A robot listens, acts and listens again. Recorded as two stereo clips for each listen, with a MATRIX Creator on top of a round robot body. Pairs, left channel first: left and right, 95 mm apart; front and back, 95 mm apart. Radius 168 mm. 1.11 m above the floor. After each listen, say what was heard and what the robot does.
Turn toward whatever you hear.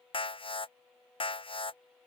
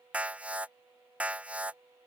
The alarm: 105° left. Turn 105° left.
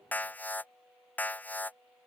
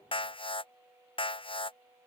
The alarm is now 20° left. Turn 20° left.
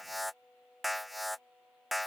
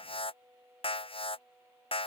Found it: an alarm, straight ahead.